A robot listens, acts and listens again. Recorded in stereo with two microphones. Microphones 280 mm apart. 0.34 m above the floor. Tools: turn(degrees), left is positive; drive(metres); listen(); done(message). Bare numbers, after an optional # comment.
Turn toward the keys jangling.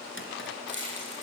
# The keys jangling: about 45° right or 135° right.
turn(-45)
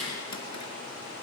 done("Found it: keys jangling, straight ahead, over 4 m away.")